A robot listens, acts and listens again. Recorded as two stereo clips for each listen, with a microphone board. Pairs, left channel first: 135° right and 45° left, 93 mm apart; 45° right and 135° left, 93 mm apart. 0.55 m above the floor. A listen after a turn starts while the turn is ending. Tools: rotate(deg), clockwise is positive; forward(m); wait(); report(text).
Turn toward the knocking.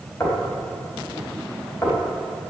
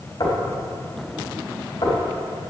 rotate(75)
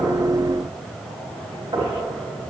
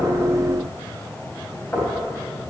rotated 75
rotate(-20)
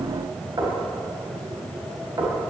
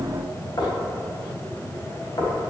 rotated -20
report("Found it: knocking, straight ahead, 2 to 4 m away.")